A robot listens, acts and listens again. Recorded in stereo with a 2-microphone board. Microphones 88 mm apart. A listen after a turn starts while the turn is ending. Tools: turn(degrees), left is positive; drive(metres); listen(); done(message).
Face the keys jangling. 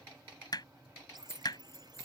turn(degrees=35)
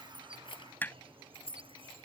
turn(degrees=105)
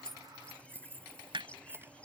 turn(degrees=-25)
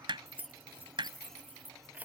turn(degrees=-15)
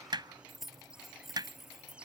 done("Facing the keys jangling.")